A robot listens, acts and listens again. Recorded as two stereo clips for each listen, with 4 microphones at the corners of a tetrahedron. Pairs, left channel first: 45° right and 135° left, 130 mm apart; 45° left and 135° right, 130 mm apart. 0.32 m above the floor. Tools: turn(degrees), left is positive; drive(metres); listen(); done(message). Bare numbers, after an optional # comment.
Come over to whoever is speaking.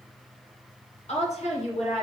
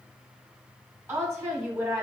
# The woman speaking: 70° right.
turn(-70)
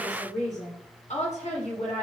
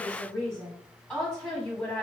# The woman speaking is now 40° right.
turn(-40)
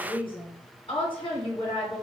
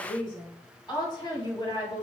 drive(1.0)
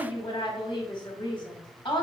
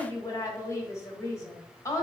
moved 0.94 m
# The woman speaking is now 15° right.
turn(-15)
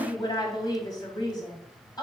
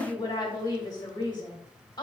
drive(1.0)
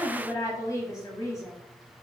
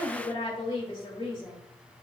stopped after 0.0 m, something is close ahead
# The woman speaking is now 10° left.
turn(10)
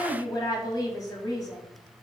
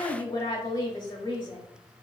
done("I am next to the woman speaking.")